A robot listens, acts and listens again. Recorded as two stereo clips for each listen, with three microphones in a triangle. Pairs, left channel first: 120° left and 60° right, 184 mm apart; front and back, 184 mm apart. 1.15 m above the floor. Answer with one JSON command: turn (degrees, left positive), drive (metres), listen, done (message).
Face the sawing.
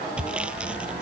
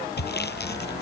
{"turn": 25}
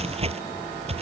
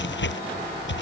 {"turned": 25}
{"done": "Found it: sawing, straight ahead."}